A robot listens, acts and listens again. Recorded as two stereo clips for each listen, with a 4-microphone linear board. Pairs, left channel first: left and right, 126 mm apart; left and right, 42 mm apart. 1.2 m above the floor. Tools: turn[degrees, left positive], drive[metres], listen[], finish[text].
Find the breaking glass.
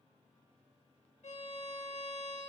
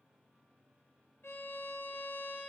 Action: listen[]
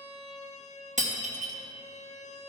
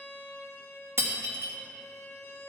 Action: turn[-90]
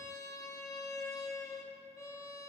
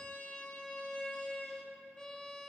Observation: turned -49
Thought: Nothing new. It was at 40° right.
Action: turn[-40]
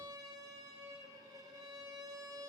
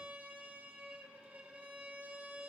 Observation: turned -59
Thought: Nothing new. It was at 20° left.
Action: turn[20]
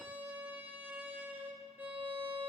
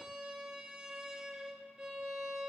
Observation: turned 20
Action: finish[I heard breaking glass from this way, but can't make it out now.]